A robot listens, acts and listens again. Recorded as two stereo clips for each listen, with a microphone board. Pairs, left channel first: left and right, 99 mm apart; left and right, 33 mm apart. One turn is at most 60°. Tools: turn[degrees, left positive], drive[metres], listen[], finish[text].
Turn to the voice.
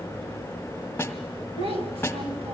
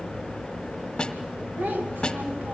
Action: turn[-60]
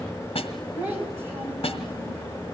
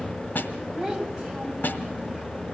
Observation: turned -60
Thought: So it is at 20° right.
Action: turn[-20]
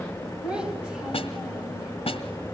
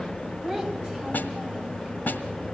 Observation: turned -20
Thought: The child speaking is now 10° right.
Action: turn[-10]
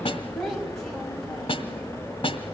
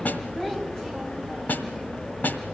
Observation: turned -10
Action: finish[Facing the child speaking.]